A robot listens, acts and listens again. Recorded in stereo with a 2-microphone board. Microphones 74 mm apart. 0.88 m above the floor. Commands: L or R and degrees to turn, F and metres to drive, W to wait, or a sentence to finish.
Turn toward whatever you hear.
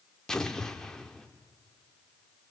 L30
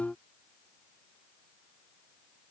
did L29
W
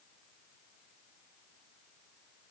I heard an explosion, but can't make it out now. It was about 20° right or 145° left.